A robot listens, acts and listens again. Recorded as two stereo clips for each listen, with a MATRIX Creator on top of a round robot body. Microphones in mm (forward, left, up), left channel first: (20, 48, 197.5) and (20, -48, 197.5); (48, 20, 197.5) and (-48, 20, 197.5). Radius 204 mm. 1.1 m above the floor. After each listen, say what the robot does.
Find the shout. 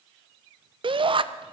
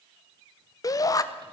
Turn 55° right.
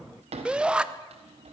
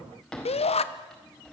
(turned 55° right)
Turn 10° right.
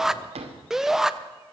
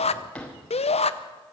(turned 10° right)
Found it: a shout, straight ahead.